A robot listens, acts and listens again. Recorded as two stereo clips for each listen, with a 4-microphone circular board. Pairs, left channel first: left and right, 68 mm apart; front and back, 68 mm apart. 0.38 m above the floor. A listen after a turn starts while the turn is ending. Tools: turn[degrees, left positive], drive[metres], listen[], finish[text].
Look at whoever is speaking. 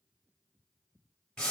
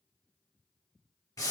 Action: listen[]
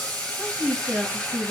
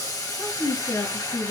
Thought: The woman speaking: 30° right.
Action: turn[-30]
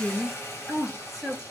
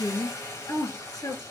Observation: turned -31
Action: finish[Facing the woman speaking.]